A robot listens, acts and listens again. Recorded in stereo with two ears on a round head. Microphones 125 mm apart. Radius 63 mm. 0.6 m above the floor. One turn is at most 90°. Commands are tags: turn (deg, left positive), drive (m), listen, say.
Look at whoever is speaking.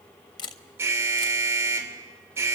<listen/>
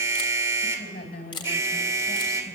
<turn deg="90"/>
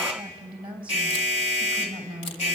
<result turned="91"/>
<turn deg="-10"/>
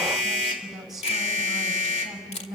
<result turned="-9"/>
<say>Found it: a woman speaking, straight ahead.</say>